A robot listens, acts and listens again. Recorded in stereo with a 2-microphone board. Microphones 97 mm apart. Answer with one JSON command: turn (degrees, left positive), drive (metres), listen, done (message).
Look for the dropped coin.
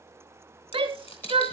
{"turn": 90}
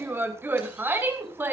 {"done": "I heard a dropped coin from this way, but can't make it out now."}